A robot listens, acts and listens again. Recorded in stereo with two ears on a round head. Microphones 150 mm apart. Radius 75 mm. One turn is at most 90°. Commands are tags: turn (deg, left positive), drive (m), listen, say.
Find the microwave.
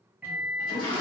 <turn deg="-30"/>
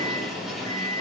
<turn deg="-90"/>
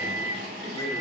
<turn deg="-50"/>
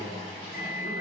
<say>Found it: a microwave, straight ahead.</say>